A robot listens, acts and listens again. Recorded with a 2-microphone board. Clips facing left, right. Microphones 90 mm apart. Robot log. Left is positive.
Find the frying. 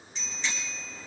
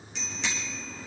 cmd idle
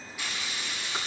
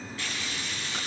cmd yaw +30
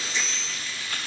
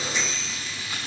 note: So it is at 20° right.
cmd yaw -20
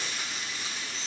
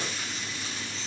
end: Found it: frying, straight ahead.